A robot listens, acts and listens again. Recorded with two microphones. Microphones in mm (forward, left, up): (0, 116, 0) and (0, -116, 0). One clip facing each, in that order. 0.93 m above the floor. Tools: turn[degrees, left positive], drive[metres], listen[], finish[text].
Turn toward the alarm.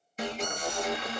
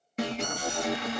Thought: The alarm: about 65° right or 115° right.
Action: turn[-65]
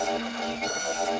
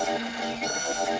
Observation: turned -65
Thought: So it is at 10° right.
Action: turn[-10]
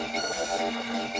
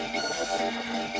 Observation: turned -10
Action: finish[Found it: an alarm, straight ahead, 1 to 2 m away.]